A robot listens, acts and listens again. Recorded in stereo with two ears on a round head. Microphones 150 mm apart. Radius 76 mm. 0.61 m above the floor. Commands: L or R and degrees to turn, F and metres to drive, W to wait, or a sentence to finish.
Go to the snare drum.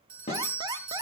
L35
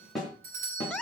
F1.0
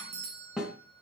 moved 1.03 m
F1.0
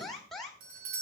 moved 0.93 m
W
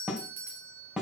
F1.0
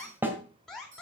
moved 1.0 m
R10
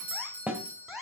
F1.0
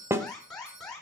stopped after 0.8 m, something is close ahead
R15
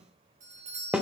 Arrived at the snare drum, straight ahead.